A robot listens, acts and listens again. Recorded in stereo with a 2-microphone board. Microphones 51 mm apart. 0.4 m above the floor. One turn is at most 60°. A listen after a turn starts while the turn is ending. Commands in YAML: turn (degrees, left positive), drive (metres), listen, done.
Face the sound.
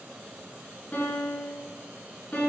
turn: 35
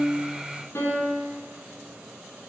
turn: 60
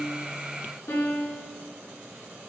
turn: 60
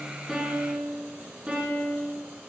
turn: -20
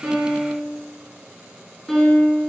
done: "Facing the piano."